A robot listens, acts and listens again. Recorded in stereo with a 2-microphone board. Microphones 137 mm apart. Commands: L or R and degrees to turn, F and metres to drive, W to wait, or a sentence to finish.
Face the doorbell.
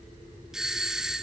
R30
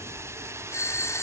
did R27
L20
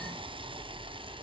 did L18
W
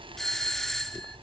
Facing the doorbell.